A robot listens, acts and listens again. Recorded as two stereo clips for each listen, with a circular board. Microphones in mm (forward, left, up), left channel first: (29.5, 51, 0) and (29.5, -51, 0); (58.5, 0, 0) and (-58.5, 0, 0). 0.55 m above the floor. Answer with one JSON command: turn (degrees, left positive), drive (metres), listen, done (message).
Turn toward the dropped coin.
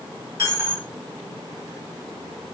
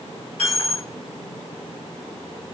{"turn": -30}
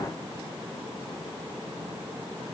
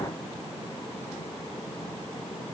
{"done": "I heard a dropped coin from this way, but can't make it out now."}